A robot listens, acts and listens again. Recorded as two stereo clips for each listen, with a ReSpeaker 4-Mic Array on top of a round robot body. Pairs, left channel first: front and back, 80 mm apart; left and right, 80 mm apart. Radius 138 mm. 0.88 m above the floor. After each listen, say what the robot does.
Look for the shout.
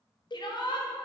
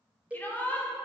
Turn 25° left.
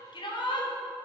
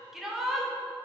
Facing the shout, 2 to 4 m away.